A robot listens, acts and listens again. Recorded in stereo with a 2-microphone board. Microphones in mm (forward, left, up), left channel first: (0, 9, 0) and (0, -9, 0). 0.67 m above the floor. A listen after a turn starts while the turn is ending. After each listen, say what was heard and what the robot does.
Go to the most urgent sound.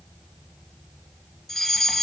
The fire alarm: about 30° left or 150° left. Turn 30° left.
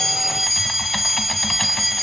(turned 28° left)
Drive 1.0 m forward.
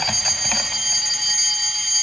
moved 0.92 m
Drive 1.0 m forward.
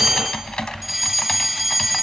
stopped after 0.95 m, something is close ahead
I am next to the fire alarm.